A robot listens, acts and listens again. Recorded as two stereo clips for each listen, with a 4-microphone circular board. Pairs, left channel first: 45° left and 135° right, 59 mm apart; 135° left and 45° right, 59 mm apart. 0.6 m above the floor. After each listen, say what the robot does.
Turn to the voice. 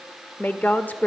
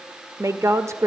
Turn 15° right.
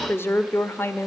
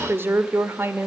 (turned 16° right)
Found it: a woman speaking, straight ahead.